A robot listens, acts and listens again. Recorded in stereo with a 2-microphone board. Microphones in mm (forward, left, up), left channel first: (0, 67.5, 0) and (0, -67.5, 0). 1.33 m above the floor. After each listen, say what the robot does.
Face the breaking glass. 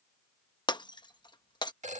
Turn 35° left.
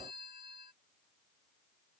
Keep listening.
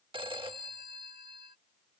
I heard breaking glass, but can't make it out now. It was about straight ahead or 110° left.